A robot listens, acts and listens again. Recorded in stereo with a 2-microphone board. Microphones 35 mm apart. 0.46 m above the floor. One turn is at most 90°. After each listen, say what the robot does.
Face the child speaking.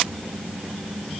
Keep listening.
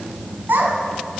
Turn 70° right.
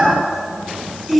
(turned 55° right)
Found it: a child speaking, straight ahead.